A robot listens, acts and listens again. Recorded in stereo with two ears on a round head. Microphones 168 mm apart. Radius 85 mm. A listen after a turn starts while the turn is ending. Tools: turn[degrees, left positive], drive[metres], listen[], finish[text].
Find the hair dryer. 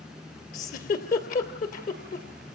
Action: listen[]
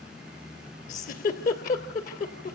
Action: listen[]
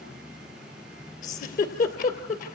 Action: finish[I can't make out a hair dryer, only a giggle.]